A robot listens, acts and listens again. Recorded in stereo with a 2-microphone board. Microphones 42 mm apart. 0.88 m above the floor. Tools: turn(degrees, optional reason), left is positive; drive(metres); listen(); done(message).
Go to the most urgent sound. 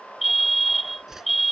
turn(degrees=-30)
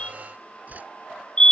turn(degrees=25, reason="So it is at 25° left.")
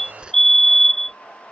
turn(degrees=10, reason="The fire alarm is now 10° left.")
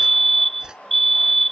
drive(metres=1.0)
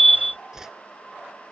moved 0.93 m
drive(metres=1.0)
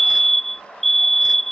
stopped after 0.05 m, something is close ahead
done("Arrived at the fire alarm, straight ahead.")